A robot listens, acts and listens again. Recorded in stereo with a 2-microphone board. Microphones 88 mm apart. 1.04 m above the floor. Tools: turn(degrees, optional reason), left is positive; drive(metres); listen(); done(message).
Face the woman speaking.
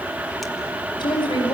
turn(degrees=60, reason="The woman speaking: about 60° left or 120° left.")
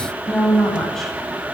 done("Facing the woman speaking.")